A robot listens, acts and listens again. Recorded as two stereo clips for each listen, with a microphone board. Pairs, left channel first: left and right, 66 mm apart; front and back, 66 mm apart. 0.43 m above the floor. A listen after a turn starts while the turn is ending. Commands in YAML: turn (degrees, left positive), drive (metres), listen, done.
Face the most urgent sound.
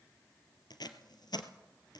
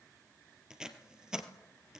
listen: true
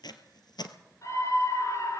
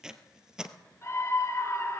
turn: 50
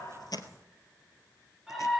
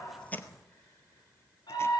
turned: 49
done: "Facing the scream, over 4 m away."